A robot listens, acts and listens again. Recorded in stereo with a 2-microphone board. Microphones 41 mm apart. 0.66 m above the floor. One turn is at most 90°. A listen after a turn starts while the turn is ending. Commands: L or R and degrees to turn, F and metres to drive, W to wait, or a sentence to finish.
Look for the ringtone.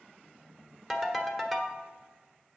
L30
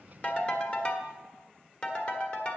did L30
L90
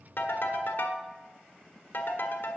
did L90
L60
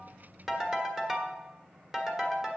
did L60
R10
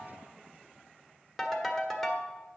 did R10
Found it: a ringtone, straight ahead.